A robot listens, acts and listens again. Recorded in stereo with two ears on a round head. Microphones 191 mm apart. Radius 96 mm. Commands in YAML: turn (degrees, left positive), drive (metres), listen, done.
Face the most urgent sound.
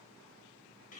listen: true
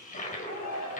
turn: 90
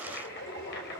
listen: true
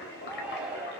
done: "Facing the shout, over 4 m away."